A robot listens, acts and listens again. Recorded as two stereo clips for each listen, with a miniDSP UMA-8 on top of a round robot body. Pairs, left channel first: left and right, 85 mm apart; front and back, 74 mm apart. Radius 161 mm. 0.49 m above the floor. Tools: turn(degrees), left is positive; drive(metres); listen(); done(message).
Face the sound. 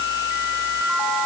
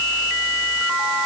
listen()
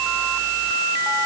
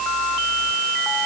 listen()
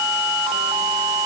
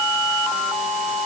done("I can't make out anything to turn to.")